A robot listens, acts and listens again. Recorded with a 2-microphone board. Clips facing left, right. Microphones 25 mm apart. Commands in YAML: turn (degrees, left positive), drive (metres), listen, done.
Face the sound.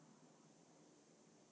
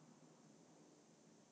listen: true
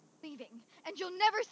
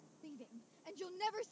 turn: 60
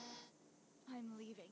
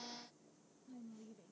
listen: true
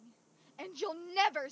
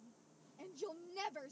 turn: 60
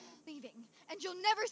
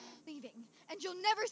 done: "Found it: a shout, straight ahead."